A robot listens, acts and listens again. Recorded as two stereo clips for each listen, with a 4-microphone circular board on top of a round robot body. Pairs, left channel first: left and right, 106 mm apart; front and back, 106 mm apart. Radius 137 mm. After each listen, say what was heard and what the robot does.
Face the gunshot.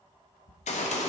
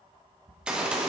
The gunshot: 100° left. Turn 100° left.
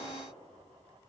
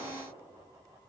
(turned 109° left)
Nothing new. It was at 10° right. Turn 10° right.
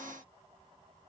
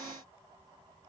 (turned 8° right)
Facing where the gunshot came from. I can't hear it now.